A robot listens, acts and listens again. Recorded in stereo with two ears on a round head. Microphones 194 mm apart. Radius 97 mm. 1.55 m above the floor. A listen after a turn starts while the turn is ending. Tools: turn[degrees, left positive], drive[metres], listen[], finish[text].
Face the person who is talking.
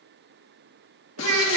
Thought: The child speaking: about 70° right or 110° right.
Action: turn[-70]
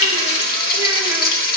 Action: listen[]
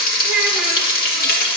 Action: finish[Found it: a child speaking, straight ahead.]